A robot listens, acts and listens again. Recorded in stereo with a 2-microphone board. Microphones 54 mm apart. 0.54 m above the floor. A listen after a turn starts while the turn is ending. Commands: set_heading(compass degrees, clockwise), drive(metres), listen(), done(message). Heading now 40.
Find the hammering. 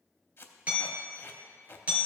set_heading(65)
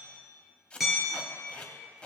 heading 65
done("Found it: hammering, straight ahead, 2 to 4 m away.")